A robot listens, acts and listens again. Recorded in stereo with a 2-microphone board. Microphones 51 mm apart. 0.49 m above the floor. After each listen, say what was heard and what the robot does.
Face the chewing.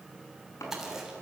Turn 30° right.
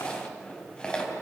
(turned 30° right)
So it is at 20° left. Turn 20° left.
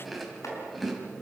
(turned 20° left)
Found it: chewing, straight ahead, 2 to 4 m away.